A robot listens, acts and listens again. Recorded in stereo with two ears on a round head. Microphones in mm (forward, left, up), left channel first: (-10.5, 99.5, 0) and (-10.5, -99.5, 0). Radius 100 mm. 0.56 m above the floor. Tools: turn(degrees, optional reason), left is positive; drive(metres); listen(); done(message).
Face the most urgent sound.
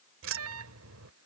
turn(degrees=-70, reason="The alarm: about 70° right or 110° right.")
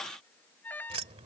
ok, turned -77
turn(degrees=10, reason="So it is at 10° left.")
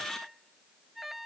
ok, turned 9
done("Facing the alarm.")